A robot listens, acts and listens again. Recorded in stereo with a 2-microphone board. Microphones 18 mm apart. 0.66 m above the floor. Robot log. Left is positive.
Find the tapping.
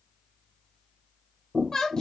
cmd yaw -30
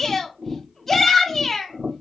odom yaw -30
note: So it is at 150° right.
cmd yaw -150
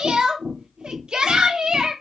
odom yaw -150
note: The tapping is now 45° right.
cmd yaw -45
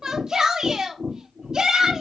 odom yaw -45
end: Found it: tapping, straight ahead.